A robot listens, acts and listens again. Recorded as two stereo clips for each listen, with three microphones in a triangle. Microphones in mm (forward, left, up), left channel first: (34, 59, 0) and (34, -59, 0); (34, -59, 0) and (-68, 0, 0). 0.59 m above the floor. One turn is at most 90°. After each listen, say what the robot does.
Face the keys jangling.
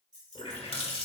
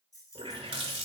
Turn 85° right.
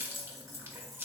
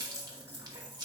Keep listening.
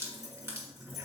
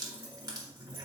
Keep listening.
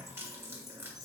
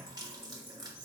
I heard keys jangling from this way, but can't make it out now.